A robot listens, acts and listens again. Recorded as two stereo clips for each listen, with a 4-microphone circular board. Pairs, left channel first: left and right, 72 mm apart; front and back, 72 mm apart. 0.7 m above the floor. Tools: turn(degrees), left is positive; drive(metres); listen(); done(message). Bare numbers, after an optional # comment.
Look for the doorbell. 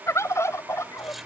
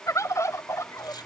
listen()
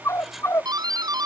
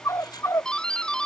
# The doorbell: 80° right.
turn(-80)
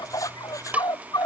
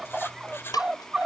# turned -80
# The doorbell is now 20° right.
turn(-20)
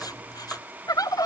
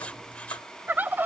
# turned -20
listen()
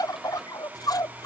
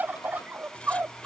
listen()
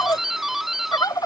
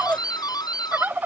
done("Found it: a doorbell, straight ahead.")